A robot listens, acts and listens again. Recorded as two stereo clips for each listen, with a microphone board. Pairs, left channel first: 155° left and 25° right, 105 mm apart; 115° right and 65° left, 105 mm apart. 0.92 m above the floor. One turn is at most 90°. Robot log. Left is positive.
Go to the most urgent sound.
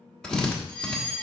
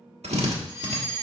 note: The fire alarm: 25° left.
cmd yaw +25
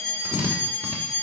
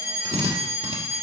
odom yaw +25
cmd fwd 1.0
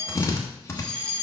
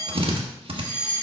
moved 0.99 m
cmd fwd 1.0
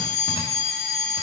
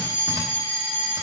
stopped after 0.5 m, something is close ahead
end: I am next to the fire alarm.